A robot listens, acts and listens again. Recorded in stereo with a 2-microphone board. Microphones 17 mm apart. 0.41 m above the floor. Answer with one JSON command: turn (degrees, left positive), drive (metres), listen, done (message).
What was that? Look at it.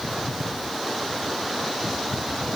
{"listen": true}
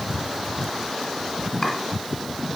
{"listen": true}
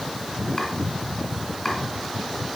{"turn": 20}
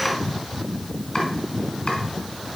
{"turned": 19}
{"turn": 140}
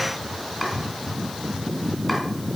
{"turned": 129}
{"turn": 10}
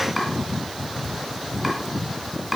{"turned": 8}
{"done": "Facing the chopping, 1 to 2 m away."}